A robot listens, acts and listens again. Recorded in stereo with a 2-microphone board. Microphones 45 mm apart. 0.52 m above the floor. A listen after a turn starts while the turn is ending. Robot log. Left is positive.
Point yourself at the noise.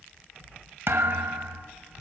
note: The thud: about 65° right or 115° right.
cmd yaw -65
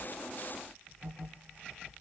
cmd idle
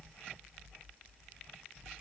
end: I heard a thud, but can't make it out now. It was about straight ahead or 50° right.